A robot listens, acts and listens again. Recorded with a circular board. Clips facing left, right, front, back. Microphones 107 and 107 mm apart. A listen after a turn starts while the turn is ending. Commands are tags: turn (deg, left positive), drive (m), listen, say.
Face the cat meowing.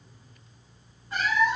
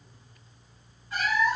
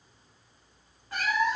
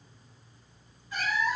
<turn deg="25"/>
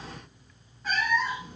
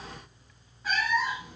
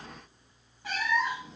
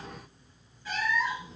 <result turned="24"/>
<say>Facing the cat meowing, 1 to 2 m away.</say>